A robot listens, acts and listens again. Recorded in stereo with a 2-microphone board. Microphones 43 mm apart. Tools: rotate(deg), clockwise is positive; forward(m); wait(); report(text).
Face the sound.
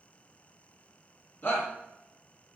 rotate(-50)
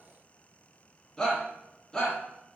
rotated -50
rotate(-10)
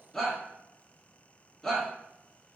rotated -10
report("Facing the shout, 1 to 2 m away.")